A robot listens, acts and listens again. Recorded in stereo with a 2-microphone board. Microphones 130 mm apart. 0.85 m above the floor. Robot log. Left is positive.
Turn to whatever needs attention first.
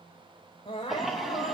note: The crying: about 40° left or 140° left.
cmd yaw +40
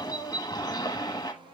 end: Found it: crying, straight ahead, over 4 m away.